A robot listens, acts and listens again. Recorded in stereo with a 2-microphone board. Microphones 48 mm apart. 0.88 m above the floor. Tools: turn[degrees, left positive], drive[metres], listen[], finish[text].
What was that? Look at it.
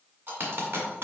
Thought: The dropped coin: about 50° right or 130° right.
Action: turn[-50]
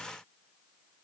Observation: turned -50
Action: listen[]
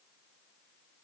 Action: finish[I heard a dropped coin, but can't make it out now. It was about straight ahead or 80° right.]